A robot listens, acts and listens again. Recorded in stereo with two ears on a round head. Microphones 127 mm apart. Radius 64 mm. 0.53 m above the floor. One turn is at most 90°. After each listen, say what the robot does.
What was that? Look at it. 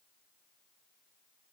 Keep listening.
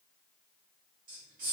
Turn 55° right.
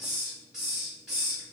Found it: a hiss, straight ahead.